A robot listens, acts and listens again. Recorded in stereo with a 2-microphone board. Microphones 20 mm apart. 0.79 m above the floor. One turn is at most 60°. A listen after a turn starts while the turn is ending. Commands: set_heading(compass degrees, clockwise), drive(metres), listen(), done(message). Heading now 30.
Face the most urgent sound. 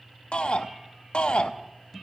set_heading(330)
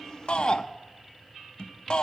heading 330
set_heading(280)
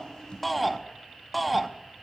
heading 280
done("Facing the shout, under 1 m away.")